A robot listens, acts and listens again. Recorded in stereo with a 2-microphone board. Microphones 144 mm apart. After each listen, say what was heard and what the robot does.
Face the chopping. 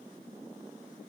Keep listening.
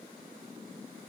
Keep listening.
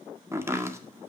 The chopping: about 20° right or 160° right. Turn 20° right.
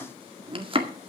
So it is at 140° right. Turn 140° right.
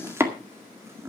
The chopping is now 20° right. Turn 20° right.
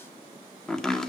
Facing the chopping, 1 to 2 m away.